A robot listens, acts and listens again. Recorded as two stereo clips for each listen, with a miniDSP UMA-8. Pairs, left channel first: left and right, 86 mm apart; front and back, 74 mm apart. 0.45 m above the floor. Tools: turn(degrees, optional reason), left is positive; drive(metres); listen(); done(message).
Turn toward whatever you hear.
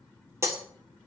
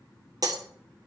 turn(degrees=-145, reason="The breaking glass: 145° right.")
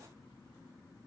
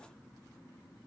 done("I heard breaking glass from this way, but can't make it out now.")